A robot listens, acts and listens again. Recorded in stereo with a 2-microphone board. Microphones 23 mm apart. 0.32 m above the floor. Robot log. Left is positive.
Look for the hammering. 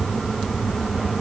cmd idle
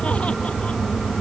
cmd idle
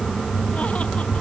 end: I can't make out hammering.